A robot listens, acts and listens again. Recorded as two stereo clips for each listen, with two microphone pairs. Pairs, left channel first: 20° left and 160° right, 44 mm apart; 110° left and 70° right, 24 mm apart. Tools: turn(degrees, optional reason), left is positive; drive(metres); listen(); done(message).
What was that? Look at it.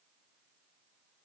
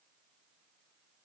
listen()
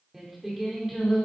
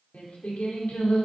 turn(degrees=110, reason="The singing: 110° left.")
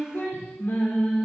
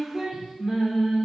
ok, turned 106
turn(degrees=-15, reason="The singing is now 15° right.")
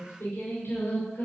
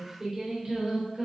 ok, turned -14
turn(degrees=-10, reason="The singing is now 10° right.")
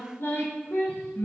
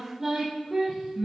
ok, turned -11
done("Found it: singing, straight ahead.")